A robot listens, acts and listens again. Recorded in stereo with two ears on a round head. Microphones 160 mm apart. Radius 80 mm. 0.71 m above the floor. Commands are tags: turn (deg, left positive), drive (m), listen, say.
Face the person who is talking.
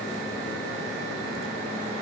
<listen/>
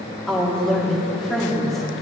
<turn deg="30"/>
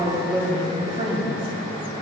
<turn deg="-30"/>
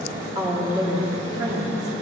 <turn deg="-20"/>
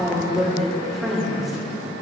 <say>Found it: a woman speaking, straight ahead, 1 to 2 m away.</say>